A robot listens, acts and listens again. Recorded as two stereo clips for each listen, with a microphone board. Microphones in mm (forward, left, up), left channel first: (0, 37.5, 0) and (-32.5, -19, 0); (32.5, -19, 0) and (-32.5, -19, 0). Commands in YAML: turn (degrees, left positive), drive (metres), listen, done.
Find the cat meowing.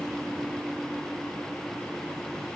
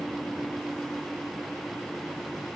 listen: true
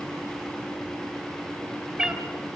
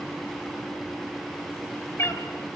turn: -40
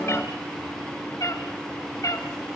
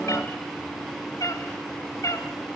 turn: 35
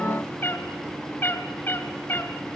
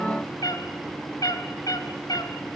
done: "Facing the cat meowing, 2 to 4 m away."